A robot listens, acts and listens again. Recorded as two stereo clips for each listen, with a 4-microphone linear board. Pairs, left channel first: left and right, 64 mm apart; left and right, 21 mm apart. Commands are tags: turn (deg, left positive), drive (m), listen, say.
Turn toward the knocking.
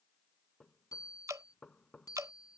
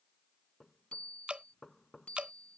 <turn deg="30"/>
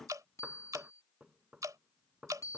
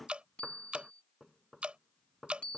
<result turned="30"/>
<turn deg="-20"/>
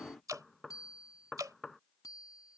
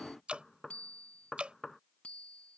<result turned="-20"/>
<say>Found it: knocking, straight ahead.</say>